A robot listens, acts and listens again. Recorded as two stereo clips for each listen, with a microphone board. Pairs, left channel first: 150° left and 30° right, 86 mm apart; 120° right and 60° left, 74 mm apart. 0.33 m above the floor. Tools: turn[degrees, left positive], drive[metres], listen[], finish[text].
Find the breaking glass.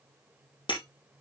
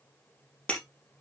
Thought: The breaking glass: 170° left.
Action: turn[170]
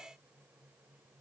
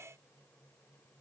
Action: finish[I heard breaking glass from this way, but can't make it out now.]